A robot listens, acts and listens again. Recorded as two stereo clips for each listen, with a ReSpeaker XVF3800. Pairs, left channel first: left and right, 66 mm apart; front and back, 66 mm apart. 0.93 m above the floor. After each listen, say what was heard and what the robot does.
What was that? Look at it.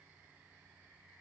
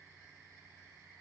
Keep listening.
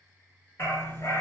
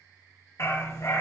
The dog barking: 35° left. Turn 35° left.
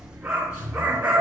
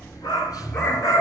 The dog barking is now 20° right. Turn 20° right.
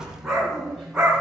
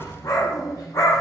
The dog barking is now 10° right. Turn 10° right.
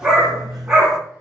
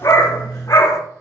The dog barking is now 10° right. Turn 10° right.
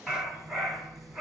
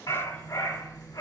Found it: a dog barking, straight ahead.